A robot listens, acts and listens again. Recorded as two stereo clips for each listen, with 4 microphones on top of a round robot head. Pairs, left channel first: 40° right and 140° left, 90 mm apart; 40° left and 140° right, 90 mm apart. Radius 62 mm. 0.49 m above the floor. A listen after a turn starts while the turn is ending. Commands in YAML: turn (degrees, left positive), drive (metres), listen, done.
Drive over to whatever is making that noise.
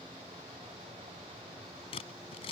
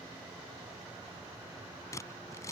turn: -15
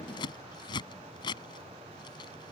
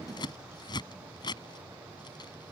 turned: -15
drive: 1.0
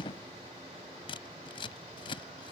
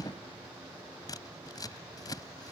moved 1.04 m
turn: -10
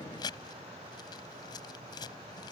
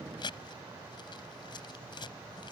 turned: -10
drive: 1.0
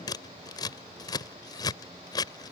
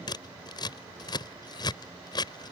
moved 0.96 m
drive: 1.0
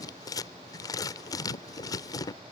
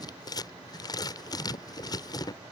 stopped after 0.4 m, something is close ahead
done: "Arrived at the scissors, straight ahead."